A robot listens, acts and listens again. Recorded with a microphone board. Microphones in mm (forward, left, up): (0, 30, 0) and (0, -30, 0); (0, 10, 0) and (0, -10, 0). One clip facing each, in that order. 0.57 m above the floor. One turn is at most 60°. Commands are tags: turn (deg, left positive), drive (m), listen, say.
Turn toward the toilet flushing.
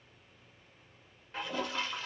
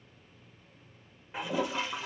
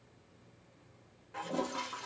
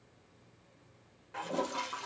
<turn deg="-30"/>
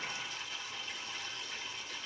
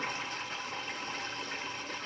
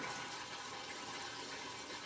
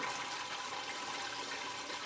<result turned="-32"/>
<turn deg="-60"/>
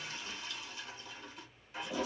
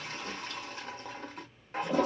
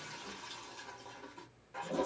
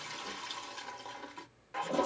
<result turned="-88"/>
<turn deg="-45"/>
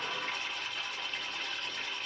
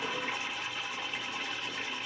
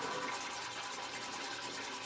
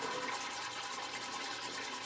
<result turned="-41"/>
<say>Found it: a toilet flushing, straight ahead, under 1 m away.</say>